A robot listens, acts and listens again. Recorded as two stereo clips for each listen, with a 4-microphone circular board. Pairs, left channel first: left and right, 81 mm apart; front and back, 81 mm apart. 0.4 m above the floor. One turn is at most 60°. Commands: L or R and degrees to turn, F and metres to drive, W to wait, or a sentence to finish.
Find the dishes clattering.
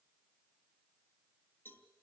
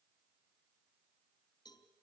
W
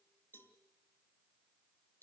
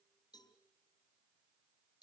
W
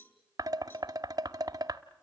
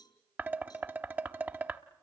R60
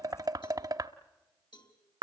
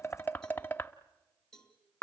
R60
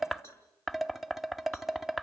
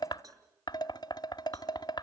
Facing the dishes clattering, 1 to 2 m away.